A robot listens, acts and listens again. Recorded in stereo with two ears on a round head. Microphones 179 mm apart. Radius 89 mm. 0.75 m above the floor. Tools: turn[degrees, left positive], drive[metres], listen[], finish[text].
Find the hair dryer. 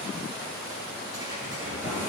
Action: turn[-30]
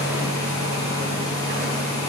Thought: So it is at 20° left.
Action: turn[20]
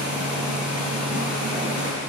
Action: finish[Facing the hair dryer.]